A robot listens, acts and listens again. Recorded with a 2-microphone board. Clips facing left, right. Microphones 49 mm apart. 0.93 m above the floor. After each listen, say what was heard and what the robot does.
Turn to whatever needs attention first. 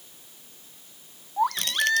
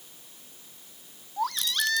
The baby crying: about 20° left or 160° left. Turn 20° left.
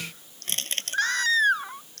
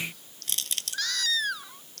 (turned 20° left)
So it is at 145° left. Turn 145° left.
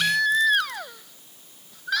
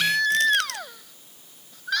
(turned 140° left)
Found it: a baby crying, straight ahead.